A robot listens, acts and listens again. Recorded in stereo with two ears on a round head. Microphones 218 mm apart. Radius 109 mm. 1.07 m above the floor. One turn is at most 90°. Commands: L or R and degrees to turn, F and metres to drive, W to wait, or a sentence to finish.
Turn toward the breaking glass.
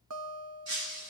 R50
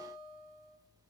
W
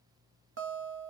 I heard breaking glass, but can't make it out now. It was about straight ahead or 80° right.